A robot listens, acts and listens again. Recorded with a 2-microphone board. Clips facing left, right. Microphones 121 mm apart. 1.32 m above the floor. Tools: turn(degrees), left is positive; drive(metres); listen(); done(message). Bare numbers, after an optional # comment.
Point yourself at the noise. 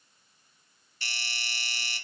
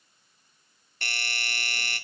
# The doorbell: about 55° right or 125° right.
turn(-55)
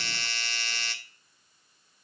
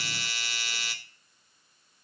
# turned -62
# So it is at 10° right.
turn(-10)
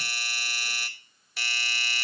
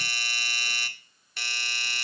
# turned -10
done("Facing the doorbell.")